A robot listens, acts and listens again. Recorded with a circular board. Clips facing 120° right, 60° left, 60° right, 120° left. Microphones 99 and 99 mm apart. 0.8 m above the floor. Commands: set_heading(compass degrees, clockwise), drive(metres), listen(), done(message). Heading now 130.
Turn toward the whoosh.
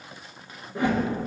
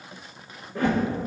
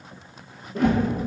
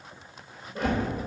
set_heading(180)
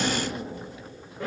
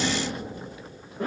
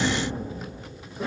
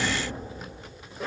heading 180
done("Found it: a whoosh, straight ahead.")